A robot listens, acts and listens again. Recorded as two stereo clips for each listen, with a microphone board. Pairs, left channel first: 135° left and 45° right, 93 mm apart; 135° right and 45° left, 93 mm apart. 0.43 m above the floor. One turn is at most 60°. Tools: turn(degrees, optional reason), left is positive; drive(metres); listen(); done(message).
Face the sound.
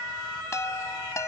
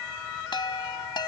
turn(degrees=-60, reason="The chime: 170° right.")
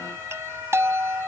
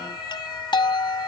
turn(degrees=-60, reason="The chime is now 105° right.")
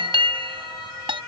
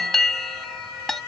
turn(degrees=-50, reason="The chime is now 50° right.")
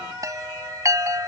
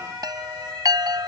done("Found it: a chime, straight ahead.")